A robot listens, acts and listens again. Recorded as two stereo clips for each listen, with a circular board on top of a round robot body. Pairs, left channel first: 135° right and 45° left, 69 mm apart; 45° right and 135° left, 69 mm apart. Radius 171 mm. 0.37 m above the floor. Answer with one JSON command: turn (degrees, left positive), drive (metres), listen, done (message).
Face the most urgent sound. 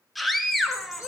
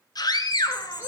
{"turn": -45}
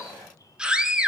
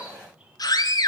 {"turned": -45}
{"turn": -30}
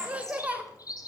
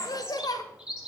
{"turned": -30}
{"turn": -25}
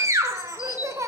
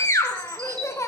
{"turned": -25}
{"done": "Facing the scream."}